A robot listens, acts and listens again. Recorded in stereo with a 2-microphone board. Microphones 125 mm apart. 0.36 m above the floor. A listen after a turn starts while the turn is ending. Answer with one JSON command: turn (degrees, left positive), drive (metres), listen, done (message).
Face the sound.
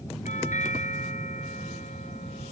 {"turn": 90}
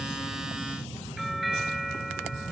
{"done": "Found it: a doorbell, straight ahead."}